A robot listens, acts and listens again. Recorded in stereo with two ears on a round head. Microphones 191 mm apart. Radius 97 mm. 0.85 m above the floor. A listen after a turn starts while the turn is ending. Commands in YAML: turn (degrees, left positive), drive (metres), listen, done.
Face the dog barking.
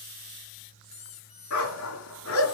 turn: 90
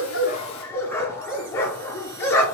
turn: 10
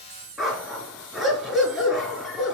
done: "Found it: a dog barking, straight ahead, 2 to 4 m away."